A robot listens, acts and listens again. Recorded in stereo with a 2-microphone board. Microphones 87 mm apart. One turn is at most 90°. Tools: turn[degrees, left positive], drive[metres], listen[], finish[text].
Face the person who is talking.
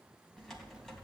Action: listen[]
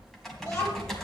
Thought: The child speaking: about 35° left or 145° left.
Action: turn[35]
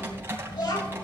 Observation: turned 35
Thought: So it is at 115° left.
Action: turn[90]
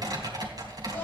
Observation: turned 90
Thought: Nothing new. It was at 25° left.
Action: turn[25]
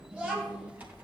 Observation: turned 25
Thought: The child speaking is now 20° right.
Action: turn[-20]
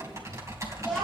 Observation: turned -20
Action: finish[Found it: a child speaking, straight ahead, over 4 m away.]